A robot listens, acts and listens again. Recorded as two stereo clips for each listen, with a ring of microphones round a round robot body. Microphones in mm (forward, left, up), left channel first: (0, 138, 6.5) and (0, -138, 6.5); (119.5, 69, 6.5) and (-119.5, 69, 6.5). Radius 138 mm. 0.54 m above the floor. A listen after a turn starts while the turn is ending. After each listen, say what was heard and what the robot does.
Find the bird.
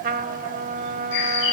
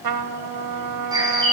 The bird: 105° left. Turn 105° left.
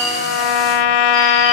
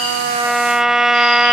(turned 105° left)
Keep listening.
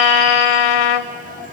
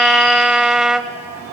Keep listening.
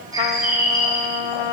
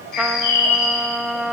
The bird is now 10° right. Turn 10° right.
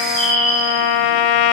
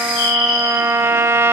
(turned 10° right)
Found it: a bird, straight ahead.